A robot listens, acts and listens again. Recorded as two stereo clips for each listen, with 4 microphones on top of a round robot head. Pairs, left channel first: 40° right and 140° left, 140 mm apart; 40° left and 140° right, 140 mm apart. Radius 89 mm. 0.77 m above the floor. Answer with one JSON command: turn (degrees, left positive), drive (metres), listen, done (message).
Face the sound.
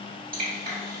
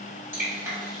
{"turn": 150}
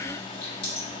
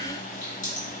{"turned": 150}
{"turn": 10}
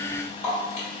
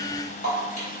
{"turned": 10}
{"done": "Facing the dripping, 1 to 2 m away."}